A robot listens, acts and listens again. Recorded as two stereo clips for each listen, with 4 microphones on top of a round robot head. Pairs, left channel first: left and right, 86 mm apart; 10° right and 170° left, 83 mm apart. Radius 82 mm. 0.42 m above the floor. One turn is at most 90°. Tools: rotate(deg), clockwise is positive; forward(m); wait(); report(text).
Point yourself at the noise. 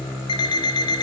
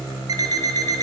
rotate(-90)
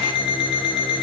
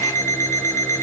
rotate(-50)
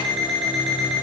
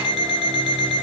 report("Found it: an alarm clock, straight ahead.")